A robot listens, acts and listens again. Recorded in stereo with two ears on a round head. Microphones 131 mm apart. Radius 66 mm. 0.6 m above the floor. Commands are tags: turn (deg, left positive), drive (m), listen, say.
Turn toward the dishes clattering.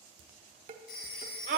<turn deg="-45"/>
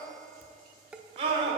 <turn deg="-10"/>
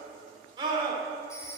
<listen/>
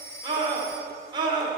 <listen/>
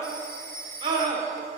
<say>Facing where the dishes clattering came from. I can't hear it now.</say>